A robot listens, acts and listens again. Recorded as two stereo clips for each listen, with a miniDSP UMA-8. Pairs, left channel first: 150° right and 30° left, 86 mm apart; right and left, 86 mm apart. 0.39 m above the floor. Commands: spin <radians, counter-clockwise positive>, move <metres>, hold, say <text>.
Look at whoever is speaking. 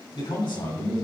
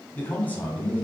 spin -2.79
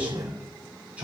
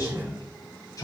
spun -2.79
spin -0.79
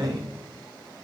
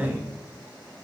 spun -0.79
spin 0.35
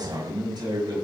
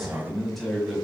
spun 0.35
say Facing the man speaking.